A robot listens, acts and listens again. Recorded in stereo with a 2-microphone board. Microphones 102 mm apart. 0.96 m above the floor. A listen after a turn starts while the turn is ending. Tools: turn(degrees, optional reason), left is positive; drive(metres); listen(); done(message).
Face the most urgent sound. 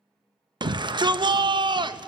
turn(degrees=-45, reason="The shout: about 45° right or 135° right.")
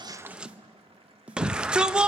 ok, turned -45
turn(degrees=-10, reason="So it is at 10° right.")
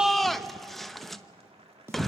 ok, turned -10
done("Found it: a shout, straight ahead.")